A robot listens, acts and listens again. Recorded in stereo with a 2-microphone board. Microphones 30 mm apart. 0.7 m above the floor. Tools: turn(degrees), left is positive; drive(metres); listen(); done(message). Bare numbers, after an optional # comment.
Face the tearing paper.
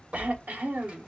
# The tearing paper: about 50° right or 130° right.
turn(-50)
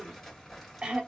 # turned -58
done("Facing the tearing paper, 2 to 4 m away.")